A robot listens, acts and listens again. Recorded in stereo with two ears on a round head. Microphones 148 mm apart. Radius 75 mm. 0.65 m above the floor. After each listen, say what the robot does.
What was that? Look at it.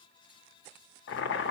Turn 75° left.
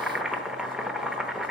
Found it: boiling, straight ahead.